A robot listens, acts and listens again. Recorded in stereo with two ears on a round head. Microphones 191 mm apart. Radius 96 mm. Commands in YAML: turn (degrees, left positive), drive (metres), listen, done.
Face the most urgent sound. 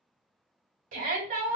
turn: -40
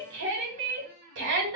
turn: -90
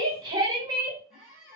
turn: -25
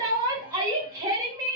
turn: -20
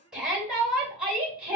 done: "Facing the shout."